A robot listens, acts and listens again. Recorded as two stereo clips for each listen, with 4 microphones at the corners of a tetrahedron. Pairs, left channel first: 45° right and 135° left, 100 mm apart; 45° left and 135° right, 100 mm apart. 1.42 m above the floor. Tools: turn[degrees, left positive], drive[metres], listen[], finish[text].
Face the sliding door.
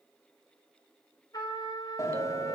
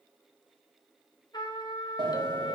Thought: The sliding door: 100° right.
Action: turn[-100]
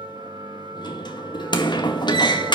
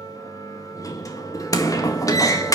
Action: finish[Found it: a sliding door, straight ahead.]